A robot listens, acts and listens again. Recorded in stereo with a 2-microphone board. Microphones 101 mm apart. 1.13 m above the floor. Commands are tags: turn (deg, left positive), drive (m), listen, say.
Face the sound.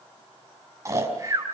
<turn deg="-30"/>
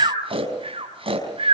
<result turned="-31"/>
<turn deg="-120"/>
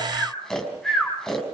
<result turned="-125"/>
<say>Facing the snoring, over 4 m away.</say>